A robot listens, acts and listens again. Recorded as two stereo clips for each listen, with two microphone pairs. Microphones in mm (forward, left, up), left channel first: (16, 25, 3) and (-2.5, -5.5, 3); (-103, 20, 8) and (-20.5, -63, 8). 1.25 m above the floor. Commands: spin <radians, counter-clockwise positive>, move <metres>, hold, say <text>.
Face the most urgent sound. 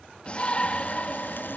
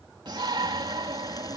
say Found it: a shout, straight ahead.